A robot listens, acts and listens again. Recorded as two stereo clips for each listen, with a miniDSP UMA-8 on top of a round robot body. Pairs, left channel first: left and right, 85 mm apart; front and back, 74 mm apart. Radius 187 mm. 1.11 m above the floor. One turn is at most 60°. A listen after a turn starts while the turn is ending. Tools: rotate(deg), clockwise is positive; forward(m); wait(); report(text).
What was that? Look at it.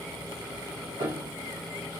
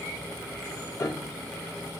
rotate(50)
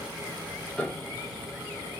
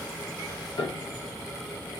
rotate(-10)
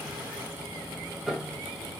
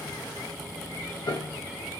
report("Facing the piano, under 1 m away.")